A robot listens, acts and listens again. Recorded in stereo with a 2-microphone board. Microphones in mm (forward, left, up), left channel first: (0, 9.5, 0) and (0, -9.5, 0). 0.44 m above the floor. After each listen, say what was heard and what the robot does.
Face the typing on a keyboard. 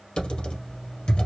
The typing on a keyboard: about 70° left or 110° left. Turn 70° left.
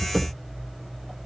Found it: typing on a keyboard, straight ahead.